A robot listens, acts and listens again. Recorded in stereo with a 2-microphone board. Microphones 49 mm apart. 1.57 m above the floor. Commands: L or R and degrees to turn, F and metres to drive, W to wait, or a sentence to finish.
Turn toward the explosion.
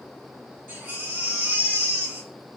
W
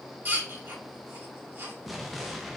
L30
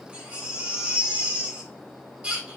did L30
W
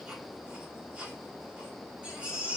I heard an explosion, but can't make it out now. It was about 30° right or 150° left.